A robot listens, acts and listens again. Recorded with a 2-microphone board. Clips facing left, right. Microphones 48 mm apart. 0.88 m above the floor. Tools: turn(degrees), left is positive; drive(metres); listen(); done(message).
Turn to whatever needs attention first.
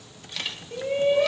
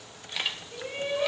turn(degrees=30)
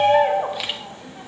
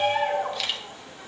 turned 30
turn(degrees=120)
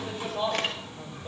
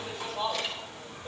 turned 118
done("Facing the shout.")